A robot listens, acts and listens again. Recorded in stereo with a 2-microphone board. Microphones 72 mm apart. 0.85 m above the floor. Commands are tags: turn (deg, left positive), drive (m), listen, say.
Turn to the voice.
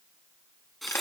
<listen/>
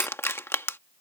<listen/>
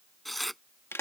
<say>I can't make out anyone speaking to turn to.</say>